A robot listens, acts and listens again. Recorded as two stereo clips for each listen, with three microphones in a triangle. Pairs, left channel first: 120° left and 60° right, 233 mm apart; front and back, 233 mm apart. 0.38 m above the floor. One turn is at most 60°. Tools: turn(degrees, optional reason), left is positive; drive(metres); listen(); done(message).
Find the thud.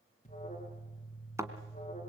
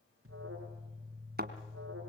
turn(degrees=-60, reason="The thud: 135° right.")
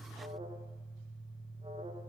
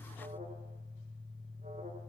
turn(degrees=-60, reason="Nothing new. It was at 75° right.")
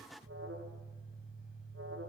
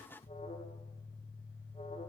turn(degrees=-15, reason="Nothing new. It was at 15° right.")
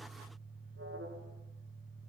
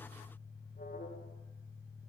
done("Facing where the thud came from. I can't hear it now.")